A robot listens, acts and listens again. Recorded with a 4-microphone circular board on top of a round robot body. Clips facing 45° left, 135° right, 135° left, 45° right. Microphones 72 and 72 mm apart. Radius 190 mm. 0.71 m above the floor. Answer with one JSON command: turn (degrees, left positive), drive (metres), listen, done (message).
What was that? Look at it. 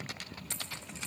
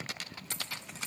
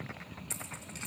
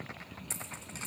{"turn": -100}
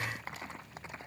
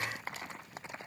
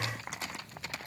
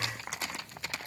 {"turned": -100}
{"done": "I heard a dropped coin from this way, but can't make it out now."}